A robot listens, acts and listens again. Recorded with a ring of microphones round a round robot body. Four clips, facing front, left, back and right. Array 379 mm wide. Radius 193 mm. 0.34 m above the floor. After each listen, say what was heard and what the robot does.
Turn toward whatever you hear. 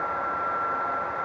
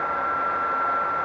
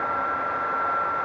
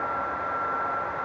Keep listening.
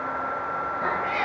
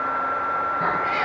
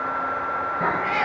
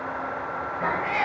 The cat meowing: 160° left. Turn 160° left.
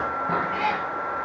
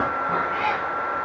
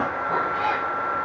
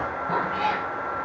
The cat meowing is now 10° right. Turn 10° right.
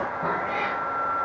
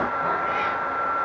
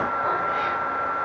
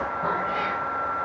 The cat meowing is now 15° right. Turn 15° right.
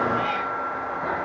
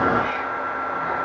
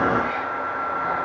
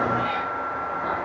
The cat meowing is now 10° right. Turn 10° right.
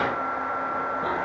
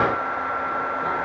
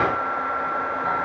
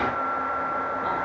Keep listening.
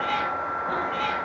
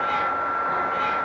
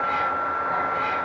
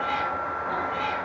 Found it: a cat meowing, straight ahead.